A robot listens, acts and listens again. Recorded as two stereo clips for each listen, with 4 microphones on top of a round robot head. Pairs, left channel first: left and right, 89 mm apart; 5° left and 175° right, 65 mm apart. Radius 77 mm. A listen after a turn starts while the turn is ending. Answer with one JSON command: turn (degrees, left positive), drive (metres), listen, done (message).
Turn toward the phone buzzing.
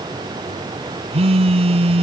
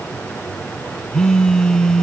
{"turn": -80}
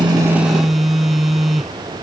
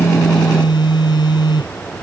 {"done": "Found it: a phone buzzing, straight ahead."}